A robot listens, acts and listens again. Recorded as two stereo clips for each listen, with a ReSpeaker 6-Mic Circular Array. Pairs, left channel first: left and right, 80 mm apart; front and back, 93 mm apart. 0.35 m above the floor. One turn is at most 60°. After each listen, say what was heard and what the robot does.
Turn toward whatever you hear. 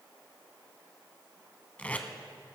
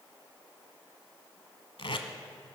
The tape being pulled: 20° left. Turn 20° left.
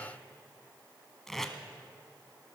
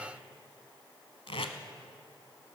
Found it: tape being pulled, straight ahead.